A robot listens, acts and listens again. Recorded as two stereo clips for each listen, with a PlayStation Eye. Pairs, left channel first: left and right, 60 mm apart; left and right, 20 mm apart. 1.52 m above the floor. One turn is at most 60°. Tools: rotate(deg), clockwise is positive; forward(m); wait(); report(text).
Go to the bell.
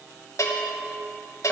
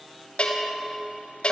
rotate(-60)
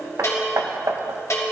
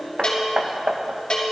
rotate(-55)
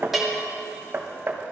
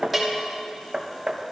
forward(1.0)
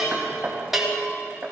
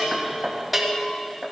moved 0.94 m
forward(1.0)
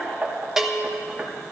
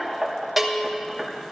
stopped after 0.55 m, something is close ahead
rotate(10)
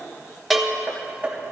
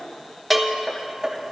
report("I am next to the bell.")